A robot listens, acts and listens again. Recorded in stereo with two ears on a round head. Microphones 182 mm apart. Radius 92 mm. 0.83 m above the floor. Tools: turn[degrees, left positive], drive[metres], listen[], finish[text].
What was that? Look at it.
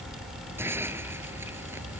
Action: turn[-30]
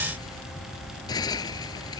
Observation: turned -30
Thought: So it is at 20° left.
Action: turn[20]
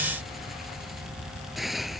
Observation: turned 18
Action: finish[Found it: a hiss, straight ahead.]